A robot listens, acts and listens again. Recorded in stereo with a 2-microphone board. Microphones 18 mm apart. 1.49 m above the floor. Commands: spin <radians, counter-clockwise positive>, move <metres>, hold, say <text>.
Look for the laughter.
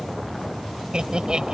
spin -0.79
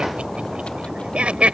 spin -1.57
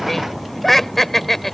spin 0.26
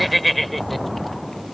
say Facing the laughter.